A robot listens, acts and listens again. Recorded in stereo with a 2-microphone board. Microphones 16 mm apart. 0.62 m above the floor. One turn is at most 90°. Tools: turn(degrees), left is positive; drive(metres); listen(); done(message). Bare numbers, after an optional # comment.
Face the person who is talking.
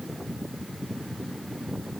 listen()
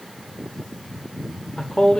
# The man speaking: about 70° left or 110° left.
turn(70)
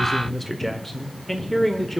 # So it is at 15° left.
turn(15)
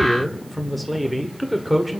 done("Found it: a man speaking, straight ahead, 1 to 2 m away.")